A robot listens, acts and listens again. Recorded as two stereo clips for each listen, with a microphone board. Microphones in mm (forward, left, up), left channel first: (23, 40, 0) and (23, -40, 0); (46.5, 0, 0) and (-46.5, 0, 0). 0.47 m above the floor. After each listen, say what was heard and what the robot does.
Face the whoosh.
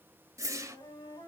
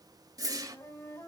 The whoosh: 135° right. Turn 135° right.
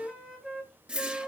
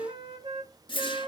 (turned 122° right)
The whoosh is now 15° right. Turn 15° right.
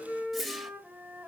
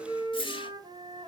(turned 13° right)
Facing the whoosh.